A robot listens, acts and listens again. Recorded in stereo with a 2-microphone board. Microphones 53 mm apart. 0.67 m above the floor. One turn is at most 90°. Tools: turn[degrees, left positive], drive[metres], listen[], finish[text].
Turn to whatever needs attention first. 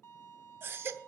Thought: The baby crying: about 50° right or 130° right.
Action: turn[-50]
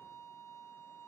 Action: listen[]
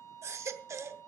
Thought: So it is at 75° right.
Action: turn[-75]
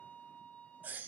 Thought: The baby crying is now 40° right.
Action: turn[-40]
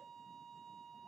Action: listen[]
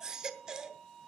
Thought: The baby crying is now 15° right.
Action: turn[-15]
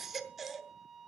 Action: finish[Facing the baby crying, under 1 m away.]